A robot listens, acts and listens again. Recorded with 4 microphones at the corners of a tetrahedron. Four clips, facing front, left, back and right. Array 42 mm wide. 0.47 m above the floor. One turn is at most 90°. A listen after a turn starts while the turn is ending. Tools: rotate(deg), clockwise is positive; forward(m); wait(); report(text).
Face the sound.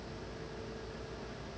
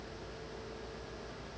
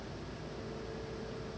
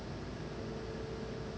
wait()
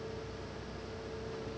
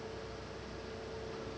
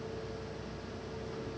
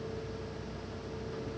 wait()
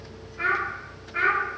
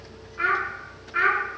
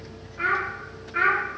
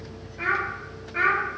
rotate(-90)
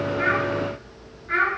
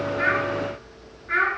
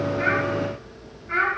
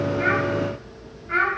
rotate(-50)
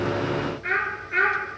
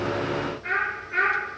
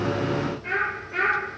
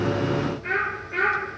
rotate(-10)
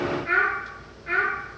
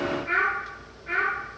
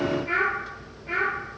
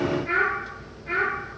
report("Found it: a child speaking, straight ahead.")